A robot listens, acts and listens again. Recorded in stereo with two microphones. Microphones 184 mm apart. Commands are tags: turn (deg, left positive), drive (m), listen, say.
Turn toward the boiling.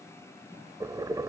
<turn deg="-20"/>
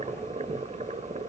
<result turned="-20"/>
<turn deg="-135"/>
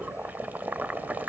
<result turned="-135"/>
<turn deg="-10"/>
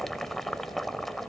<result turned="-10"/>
<say>Facing the boiling.</say>